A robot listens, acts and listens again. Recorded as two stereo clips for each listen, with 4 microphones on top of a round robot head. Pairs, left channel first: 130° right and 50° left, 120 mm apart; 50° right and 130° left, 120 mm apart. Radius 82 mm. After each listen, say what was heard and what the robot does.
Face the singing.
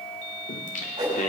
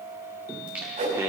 The singing: 165° right. Turn 165° right.
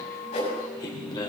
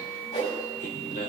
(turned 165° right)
The singing is now 75° right. Turn 75° right.
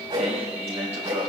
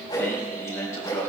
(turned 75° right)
The singing is now 15° left. Turn 15° left.
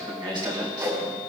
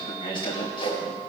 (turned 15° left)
Found it: singing, straight ahead, 2 to 4 m away.